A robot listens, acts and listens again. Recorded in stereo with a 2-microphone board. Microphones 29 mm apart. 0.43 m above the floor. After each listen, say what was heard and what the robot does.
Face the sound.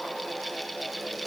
Keep listening.
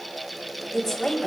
The woman speaking: about 20° left or 160° left. Turn 20° left.
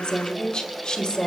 The woman speaking: about 35° left or 145° left. Turn 35° left.
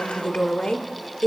The woman speaking: about 35° left or 145° left. Turn 35° left.
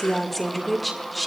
Found it: a woman speaking, straight ahead, 1 to 2 m away.